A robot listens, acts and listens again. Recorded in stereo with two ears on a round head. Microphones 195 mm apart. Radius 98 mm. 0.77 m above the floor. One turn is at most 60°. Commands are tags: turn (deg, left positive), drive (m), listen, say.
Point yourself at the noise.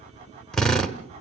<turn deg="30"/>
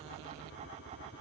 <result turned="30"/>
<listen/>
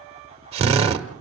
<turn deg="-25"/>
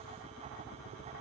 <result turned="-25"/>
<listen/>
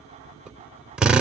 <say>Facing the drill, 1 to 2 m away.</say>